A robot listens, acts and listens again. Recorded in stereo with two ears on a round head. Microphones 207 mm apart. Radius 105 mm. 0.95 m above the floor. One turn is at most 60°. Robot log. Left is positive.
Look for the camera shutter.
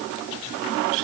cmd idle
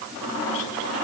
cmd idle
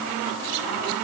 end: I can't make out a camera shutter to turn to.